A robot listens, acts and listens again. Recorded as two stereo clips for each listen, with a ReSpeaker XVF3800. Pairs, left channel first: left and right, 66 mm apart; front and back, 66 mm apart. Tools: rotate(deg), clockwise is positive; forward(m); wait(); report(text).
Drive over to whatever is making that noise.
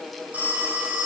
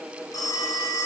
rotate(25)
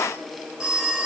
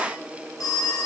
rotate(15)
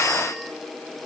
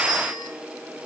wait()
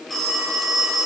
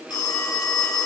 forward(1.0)
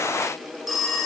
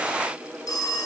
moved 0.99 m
forward(1.0)
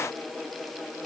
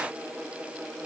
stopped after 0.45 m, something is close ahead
wait()
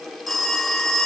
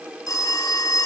report("Arrived at the phone ringing, straight ahead.")